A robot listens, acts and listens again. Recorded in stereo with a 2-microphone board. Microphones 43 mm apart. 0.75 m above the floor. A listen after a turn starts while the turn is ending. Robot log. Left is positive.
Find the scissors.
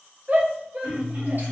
note: The scissors: about 55° right or 125° right.
cmd yaw -55
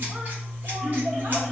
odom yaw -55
note: So it is at 50° right.
cmd yaw -50
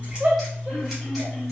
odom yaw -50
end: Found it: scissors, straight ahead.